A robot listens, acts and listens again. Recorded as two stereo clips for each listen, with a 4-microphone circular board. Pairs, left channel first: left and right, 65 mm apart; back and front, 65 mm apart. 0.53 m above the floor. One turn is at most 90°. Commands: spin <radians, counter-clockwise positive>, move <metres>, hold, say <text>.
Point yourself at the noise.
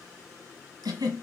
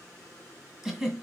spin -1.48
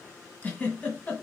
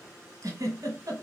spin 0.44
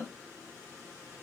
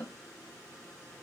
hold
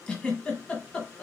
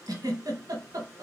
spin 0.26
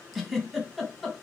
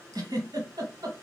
say Facing the giggle, 1 to 2 m away.